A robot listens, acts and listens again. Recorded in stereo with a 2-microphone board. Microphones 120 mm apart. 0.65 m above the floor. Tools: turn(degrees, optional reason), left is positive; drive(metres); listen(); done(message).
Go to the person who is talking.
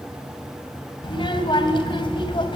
turn(degrees=40, reason="The child speaking: about 40° left or 140° left.")
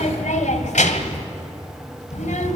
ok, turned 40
turn(degrees=100, reason="So it is at 100° left.")
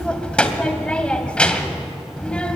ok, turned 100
turn(degrees=10, reason="The child speaking is now 10° left.")
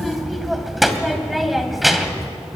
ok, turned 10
drive(metres=1.0)
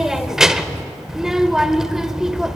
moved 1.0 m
drive(metres=1.0)
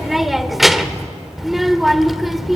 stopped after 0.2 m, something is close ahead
done("Arrived at the child speaking, straight ahead.")